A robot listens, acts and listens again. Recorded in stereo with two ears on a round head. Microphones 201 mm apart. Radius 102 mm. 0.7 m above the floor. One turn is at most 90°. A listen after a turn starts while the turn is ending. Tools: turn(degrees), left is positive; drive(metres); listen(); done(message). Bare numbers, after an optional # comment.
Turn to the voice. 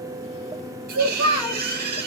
# The child speaking: about 70° right or 110° right.
turn(-70)
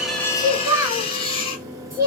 # So it is at 15° right.
turn(-15)
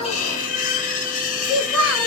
done("Found it: a child speaking, straight ahead, 1 to 2 m away.")